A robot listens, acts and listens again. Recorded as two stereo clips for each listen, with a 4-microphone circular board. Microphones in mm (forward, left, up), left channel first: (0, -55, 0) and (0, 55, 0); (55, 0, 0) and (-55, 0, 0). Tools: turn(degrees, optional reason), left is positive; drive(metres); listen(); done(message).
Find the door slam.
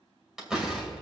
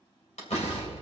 done("Facing the door slam, 2 to 4 m away.")